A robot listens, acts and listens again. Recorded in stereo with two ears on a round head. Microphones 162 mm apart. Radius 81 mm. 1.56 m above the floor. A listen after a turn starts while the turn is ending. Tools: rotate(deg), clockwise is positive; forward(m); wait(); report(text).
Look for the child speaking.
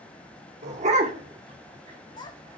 rotate(-25)
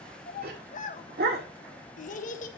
rotate(-130)
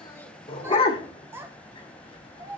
rotate(15)
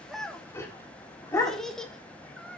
report("Facing the child speaking.")